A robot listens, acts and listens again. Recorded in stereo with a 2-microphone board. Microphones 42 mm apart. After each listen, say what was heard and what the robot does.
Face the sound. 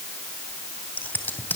The scissors: about 45° left or 135° left. Turn 45° left.
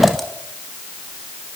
Found it: scissors, straight ahead, 2 to 4 m away.